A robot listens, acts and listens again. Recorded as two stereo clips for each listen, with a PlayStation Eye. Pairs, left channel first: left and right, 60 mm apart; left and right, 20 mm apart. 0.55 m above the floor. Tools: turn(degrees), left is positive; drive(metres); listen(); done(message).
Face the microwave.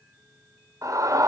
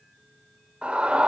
listen()
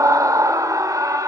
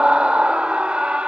listen()
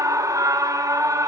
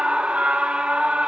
done("I can't make out a microwave, only a scream.")